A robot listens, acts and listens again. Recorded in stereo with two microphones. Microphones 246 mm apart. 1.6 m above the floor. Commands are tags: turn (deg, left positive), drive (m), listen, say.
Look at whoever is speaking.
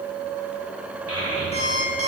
<turn deg="65"/>
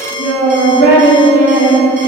<turn deg="50"/>
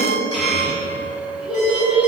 <say>Facing the child speaking, 2 to 4 m away.</say>